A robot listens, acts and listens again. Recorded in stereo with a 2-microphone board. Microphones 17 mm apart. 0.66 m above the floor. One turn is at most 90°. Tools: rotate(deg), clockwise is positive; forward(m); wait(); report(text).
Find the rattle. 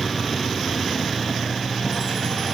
wait()
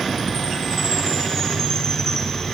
wait()
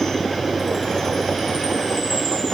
report("I can't make out a rattle to turn to.")